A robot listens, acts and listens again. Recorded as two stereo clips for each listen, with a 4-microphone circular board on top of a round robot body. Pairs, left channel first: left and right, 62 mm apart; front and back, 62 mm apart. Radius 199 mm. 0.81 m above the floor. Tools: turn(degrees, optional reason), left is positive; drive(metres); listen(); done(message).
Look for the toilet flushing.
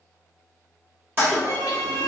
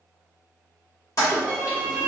turn(degrees=-35, reason="The toilet flushing: 35° right.")
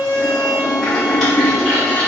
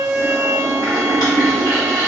done("Found it: a toilet flushing, straight ahead.")